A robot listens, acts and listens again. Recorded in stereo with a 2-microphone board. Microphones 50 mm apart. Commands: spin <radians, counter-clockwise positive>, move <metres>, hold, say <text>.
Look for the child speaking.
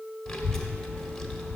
spin 0.52
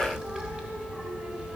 spin -0.35
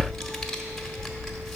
say Found it: a child speaking, straight ahead.